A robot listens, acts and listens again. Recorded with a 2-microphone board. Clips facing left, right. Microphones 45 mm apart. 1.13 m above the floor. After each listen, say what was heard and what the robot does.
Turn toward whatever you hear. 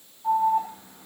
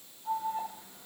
The alarm: about 60° left or 120° left. Turn 60° left.
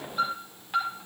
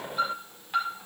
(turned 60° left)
Found it: an alarm, straight ahead.